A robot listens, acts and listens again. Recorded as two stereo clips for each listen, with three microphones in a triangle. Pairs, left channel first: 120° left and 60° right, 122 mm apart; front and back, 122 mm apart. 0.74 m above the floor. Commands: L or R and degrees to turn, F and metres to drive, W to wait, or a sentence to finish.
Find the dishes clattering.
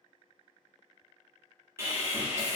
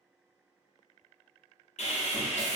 W
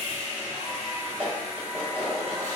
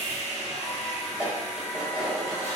R100
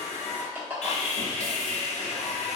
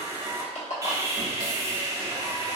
L15
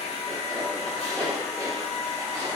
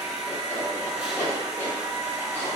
Found it: dishes clattering, straight ahead, 1 to 2 m away.